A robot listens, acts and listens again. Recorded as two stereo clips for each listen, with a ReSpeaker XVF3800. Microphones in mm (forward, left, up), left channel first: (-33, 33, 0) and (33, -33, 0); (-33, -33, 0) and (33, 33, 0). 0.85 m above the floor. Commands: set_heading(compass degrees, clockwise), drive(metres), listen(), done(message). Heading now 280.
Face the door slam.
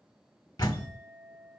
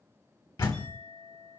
set_heading(100)
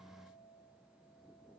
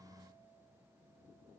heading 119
set_heading(99)
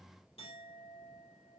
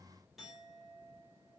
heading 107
set_heading(97)
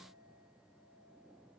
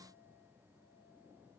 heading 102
done("Facing where the door slam came from. I can't hear it now.")